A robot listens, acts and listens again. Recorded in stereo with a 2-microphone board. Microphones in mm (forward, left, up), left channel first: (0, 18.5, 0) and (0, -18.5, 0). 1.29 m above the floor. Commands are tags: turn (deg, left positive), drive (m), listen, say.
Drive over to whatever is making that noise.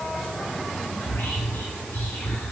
<turn deg="70"/>
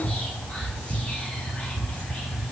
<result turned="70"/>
<turn deg="35"/>
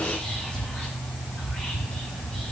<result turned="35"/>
<turn deg="25"/>
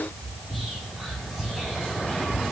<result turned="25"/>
<drive m="1.0"/>
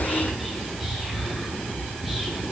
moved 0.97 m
<drive m="1.0"/>
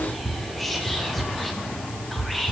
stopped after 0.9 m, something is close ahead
<say>Arrived at the whispering, straight ahead.</say>